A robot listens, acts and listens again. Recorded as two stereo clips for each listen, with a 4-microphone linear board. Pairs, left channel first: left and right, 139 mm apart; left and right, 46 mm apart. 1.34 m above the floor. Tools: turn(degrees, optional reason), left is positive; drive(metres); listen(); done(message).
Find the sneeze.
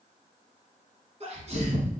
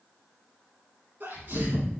turn(degrees=-45, reason="The sneeze: about 45° right or 135° right.")
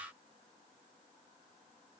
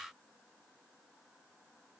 listen()
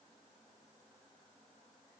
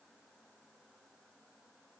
done("I heard a sneeze, but can't make it out now. It was about straight ahead or 90° right.")